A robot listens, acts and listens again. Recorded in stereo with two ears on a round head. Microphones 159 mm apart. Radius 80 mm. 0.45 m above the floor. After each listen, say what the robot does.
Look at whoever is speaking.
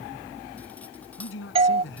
Turn 90° left.
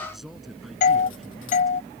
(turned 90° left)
Keep listening.
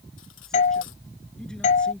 Keep listening.
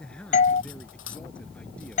Found it: a man speaking, straight ahead.